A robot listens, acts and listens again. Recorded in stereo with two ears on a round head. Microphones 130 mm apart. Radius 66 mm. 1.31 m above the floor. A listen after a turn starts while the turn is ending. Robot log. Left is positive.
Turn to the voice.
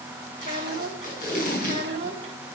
note: The child speaking: about 40° right or 140° right.
cmd yaw -40
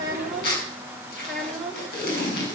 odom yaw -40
end: Found it: a child speaking, straight ahead.